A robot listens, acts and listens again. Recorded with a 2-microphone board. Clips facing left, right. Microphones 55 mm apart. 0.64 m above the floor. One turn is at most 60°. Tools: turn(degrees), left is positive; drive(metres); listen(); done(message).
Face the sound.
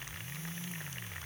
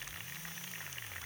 listen()
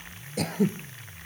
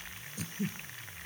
turn(degrees=60)
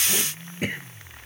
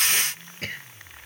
turn(degrees=15)
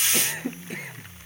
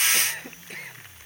done("Facing the throat clearing.")